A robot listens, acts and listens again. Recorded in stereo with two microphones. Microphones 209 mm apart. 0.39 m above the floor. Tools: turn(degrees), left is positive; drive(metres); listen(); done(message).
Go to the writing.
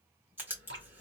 turn(degrees=-30)
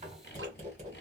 turn(degrees=-140)
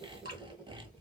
drive(metres=1.0)
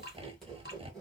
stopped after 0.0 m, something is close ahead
done("Something is in my way. I am facing the writing but have not reached it.")